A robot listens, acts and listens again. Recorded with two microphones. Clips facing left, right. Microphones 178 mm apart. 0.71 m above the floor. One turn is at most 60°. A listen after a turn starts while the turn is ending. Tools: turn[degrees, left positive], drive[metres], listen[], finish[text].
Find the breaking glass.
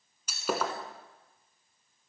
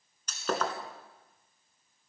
Action: turn[30]
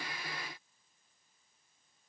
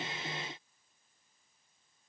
Action: listen[]
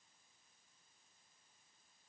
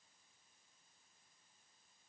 Action: finish[I heard breaking glass, but can't make it out now. It was about 20° right or 140° left.]